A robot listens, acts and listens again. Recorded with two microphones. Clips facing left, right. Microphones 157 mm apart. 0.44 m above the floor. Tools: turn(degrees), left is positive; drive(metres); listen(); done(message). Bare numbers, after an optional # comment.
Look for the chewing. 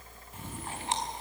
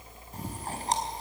# The chewing: about 35° right or 145° right.
turn(-35)
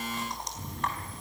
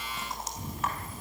done("Facing the chewing.")